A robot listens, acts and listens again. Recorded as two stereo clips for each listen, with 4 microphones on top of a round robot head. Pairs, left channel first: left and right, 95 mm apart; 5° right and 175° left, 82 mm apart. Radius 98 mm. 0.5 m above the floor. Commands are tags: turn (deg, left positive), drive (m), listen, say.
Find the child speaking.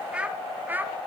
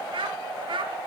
<turn deg="-160"/>
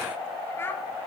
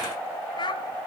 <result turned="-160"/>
<turn deg="20"/>
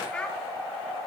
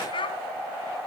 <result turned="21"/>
<turn deg="10"/>
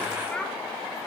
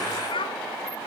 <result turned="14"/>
<turn deg="10"/>
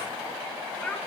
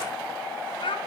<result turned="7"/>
<turn deg="10"/>
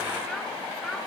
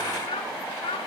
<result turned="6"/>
<say>Found it: a child speaking, straight ahead.</say>